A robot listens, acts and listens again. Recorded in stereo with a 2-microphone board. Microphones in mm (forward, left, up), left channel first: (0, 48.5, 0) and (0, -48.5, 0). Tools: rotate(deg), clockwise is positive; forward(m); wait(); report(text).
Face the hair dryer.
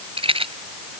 wait()
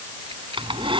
rotate(65)
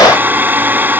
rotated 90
rotate(20)
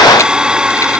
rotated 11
rotate(10)
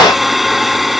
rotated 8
report("Facing the hair dryer.")